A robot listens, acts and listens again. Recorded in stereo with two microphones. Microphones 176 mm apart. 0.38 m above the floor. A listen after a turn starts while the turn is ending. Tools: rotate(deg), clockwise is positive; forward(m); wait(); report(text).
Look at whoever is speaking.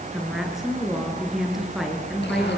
rotate(-30)
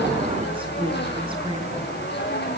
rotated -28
wait()
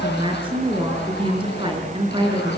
rotate(30)
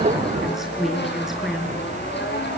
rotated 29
report("Found it: a woman speaking, straight ahead.")